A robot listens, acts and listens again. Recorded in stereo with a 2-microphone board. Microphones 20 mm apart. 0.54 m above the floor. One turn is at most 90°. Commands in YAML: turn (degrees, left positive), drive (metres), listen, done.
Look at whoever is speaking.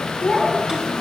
turn: 50
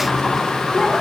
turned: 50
listen: true
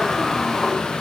listen: true
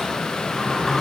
done: "I heard a child speaking, but can't make it out now. It was about straight ahead or 80° left."